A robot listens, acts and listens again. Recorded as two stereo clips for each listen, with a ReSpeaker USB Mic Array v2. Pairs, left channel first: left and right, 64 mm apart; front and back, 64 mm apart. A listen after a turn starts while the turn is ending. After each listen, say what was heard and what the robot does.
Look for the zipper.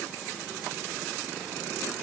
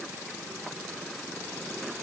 Keep listening.
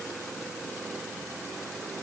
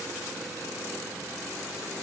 Keep listening.
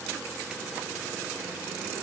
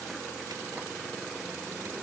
I can't make out a zipper to turn to.